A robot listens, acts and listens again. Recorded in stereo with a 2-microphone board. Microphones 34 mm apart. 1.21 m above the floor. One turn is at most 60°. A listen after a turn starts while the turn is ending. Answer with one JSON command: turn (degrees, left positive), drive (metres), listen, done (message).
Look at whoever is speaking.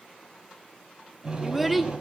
{"turn": 30}
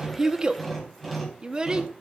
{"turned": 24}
{"turn": -25}
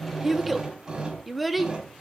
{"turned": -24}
{"done": "Found it: a child speaking, straight ahead, 1 to 2 m away."}